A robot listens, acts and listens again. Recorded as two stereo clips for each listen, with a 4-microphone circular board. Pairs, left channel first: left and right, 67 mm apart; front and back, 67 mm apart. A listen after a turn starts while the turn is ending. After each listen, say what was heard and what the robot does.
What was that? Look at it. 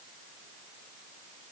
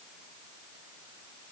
Keep listening.
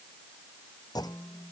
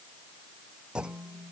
The clunk: 105° left. Turn 105° left.
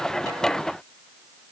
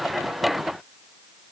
I heard a clunk from this way, but can't make it out now.